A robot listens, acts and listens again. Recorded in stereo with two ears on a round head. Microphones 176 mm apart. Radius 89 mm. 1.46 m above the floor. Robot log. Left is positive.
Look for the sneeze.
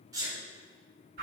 note: The sneeze: about 20° right or 160° right.
cmd yaw -20
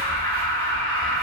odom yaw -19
cmd idle
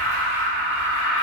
end: I heard a sneeze, but can't make it out now. It was about straight ahead or 145° right.